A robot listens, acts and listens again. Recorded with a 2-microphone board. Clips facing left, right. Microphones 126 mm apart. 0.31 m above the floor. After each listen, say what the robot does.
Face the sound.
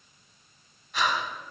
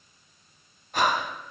Turn 50° right.
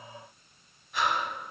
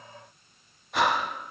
Turn 80° right.
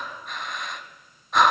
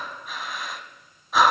Facing the breathing.